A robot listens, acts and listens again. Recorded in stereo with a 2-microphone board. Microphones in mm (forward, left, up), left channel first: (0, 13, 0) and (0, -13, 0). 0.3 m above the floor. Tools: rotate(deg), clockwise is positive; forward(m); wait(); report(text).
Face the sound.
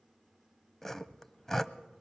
rotate(-15)
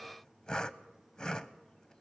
rotate(-150)
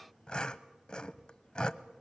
rotate(-35)
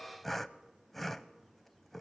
report("Facing the sawing.")